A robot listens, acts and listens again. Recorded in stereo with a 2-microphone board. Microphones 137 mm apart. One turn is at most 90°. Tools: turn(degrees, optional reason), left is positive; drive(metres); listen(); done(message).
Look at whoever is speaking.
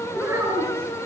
turn(degrees=-20, reason="The child speaking: about 20° right or 160° right.")
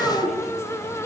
turn(degrees=30)
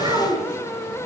turn(degrees=-35, reason="So it is at 35° right.")
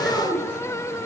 done("Facing the child speaking, over 4 m away.")